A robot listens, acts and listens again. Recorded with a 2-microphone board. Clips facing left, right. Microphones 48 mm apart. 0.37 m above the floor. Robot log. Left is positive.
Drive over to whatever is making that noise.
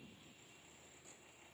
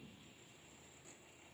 cmd idle
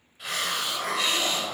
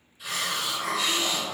note: The hiss: about 55° left or 125° left.
cmd yaw +55
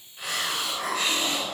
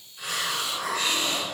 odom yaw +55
note: So it is at 35° left.
cmd yaw +35
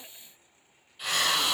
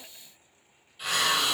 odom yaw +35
cmd fwd 1.0
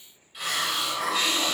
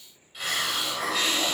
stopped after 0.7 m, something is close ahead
end: I am next to the hiss.